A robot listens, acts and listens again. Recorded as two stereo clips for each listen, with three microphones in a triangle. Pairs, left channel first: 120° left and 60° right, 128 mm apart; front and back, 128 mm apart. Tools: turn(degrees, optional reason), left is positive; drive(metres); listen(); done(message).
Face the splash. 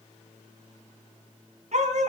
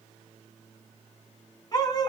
listen()
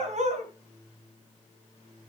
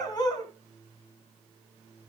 listen()
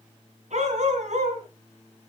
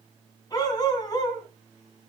done("I can't make out a splash to turn to.")